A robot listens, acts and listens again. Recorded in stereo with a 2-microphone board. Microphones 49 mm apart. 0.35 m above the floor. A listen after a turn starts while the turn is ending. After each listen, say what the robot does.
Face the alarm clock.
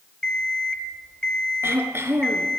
Turn 30° left.
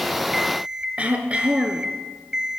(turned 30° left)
Turn 15° right.
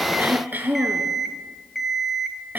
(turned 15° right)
Facing the alarm clock.